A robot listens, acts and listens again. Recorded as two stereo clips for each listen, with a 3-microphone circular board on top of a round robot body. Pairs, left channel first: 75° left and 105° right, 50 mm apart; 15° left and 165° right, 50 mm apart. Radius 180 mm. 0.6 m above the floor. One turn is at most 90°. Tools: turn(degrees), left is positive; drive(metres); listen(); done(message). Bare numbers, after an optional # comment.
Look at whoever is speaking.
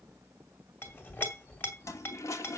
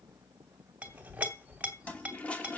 listen()
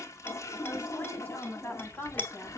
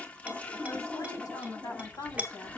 # The woman speaking: 25° left.
turn(25)
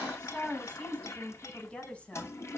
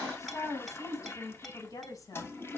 # The woman speaking is now 10° left.
turn(10)
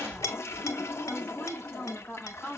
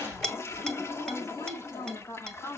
done("Found it: a woman speaking, straight ahead.")